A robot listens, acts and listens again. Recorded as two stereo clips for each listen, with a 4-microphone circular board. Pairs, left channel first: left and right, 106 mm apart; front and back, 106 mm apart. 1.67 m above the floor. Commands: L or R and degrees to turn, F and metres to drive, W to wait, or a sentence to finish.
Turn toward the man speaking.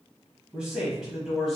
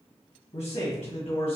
Found it: a man speaking, straight ahead, 1 to 2 m away.